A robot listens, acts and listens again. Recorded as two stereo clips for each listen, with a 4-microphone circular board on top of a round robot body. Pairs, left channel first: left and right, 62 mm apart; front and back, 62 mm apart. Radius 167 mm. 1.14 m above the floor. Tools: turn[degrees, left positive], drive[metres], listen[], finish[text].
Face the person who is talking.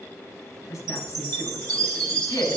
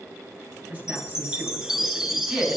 Thought: The woman speaking: 120° left.
Action: turn[120]
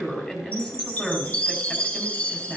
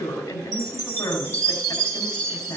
Thought: The woman speaking is now 10° left.
Action: turn[10]
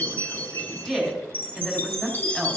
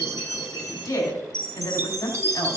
Action: finish[Facing the woman speaking.]